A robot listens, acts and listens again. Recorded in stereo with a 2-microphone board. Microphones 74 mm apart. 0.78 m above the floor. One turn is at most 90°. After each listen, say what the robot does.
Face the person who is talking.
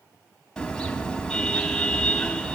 Keep listening.
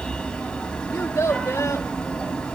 Turn 40° left.
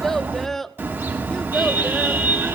Facing the child speaking, 1 to 2 m away.